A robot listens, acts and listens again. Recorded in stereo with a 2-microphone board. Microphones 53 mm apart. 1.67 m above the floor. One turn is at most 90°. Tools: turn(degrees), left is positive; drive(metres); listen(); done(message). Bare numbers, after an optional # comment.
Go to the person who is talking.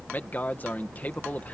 # The man speaking: about 35° left or 145° left.
turn(35)
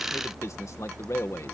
# So it is at 110° left.
turn(90)
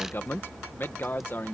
# The man speaking is now 45° left.
turn(45)
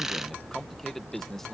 drive(1.0)
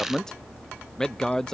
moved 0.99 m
# The man speaking is now 10° left.
turn(10)
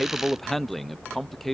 drive(1.0)
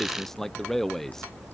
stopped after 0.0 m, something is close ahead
done("I am next to the man speaking.")